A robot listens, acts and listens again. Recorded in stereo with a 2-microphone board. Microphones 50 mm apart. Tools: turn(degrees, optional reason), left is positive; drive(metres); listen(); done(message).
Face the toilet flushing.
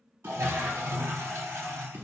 turn(degrees=-75, reason="The toilet flushing: about 75° right or 105° right.")
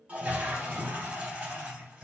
turn(degrees=-25, reason="So it is at 25° right.")
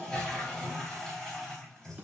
turn(degrees=10, reason="The toilet flushing is now 10° left.")
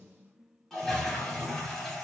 turn(degrees=10, reason="The toilet flushing is now 10° left.")
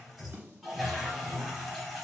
done("Facing the toilet flushing, under 1 m away.")